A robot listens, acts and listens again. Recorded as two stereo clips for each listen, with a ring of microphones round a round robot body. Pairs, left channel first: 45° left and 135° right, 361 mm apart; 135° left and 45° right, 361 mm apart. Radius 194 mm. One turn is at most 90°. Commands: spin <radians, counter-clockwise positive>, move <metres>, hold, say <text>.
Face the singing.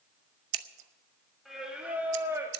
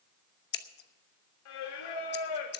spin 1.57
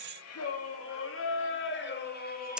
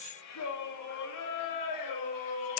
spin 1.57
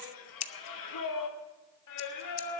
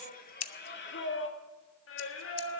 spin 1.40
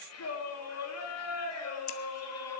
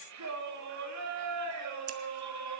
say Found it: singing, straight ahead, 1 to 2 m away.